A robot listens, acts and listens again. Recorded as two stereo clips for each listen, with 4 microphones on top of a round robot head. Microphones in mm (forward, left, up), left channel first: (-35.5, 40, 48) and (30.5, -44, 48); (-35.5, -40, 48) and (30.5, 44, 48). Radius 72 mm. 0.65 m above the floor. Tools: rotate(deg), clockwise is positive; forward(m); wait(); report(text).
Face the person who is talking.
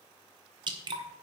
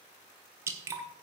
wait()
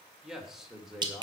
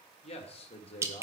rotate(135)
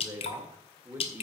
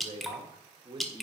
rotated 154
rotate(-15)
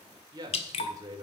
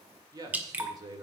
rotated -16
report("Facing the man speaking.")